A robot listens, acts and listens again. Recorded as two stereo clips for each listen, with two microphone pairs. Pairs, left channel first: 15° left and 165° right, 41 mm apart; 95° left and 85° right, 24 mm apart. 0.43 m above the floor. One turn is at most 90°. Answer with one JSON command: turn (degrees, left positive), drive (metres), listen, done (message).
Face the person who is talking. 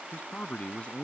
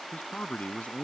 {"turn": 75}
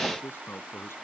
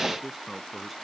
{"done": "Facing the man speaking."}